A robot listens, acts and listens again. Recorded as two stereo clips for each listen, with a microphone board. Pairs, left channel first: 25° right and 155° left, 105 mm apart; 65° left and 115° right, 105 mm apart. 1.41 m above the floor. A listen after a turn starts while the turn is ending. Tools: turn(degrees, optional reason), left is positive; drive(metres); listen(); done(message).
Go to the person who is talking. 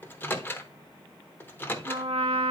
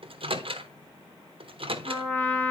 listen()
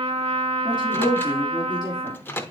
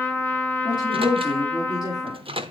turn(degrees=20, reason="The woman speaking: 20° left.")
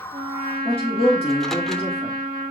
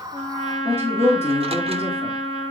drive(metres=1.0)
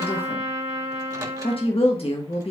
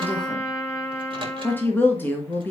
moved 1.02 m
drive(metres=1.0)
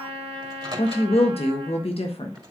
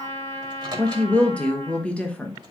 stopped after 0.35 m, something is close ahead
turn(degrees=-10, reason="The woman speaking is now 10° right.")
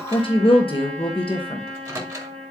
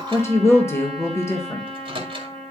done("I am next to the woman speaking.")